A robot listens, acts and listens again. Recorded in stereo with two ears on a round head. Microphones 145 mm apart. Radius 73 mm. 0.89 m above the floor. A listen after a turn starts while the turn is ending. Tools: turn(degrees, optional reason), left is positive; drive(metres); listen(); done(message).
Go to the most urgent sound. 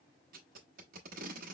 listen()
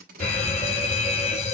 turn(degrees=45, reason="The fire alarm: about 45° left or 135° left.")
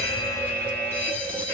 turn(degrees=10, reason="So it is at 10° left.")
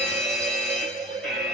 drive(metres=1.0)
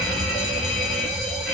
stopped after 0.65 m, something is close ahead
done("I am next to the fire alarm.")